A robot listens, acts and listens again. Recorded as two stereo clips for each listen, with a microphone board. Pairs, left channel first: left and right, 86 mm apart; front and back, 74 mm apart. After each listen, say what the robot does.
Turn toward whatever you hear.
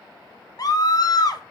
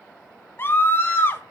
Turn 55° left.
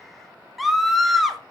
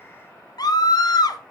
Found it: a scream, straight ahead, under 1 m away.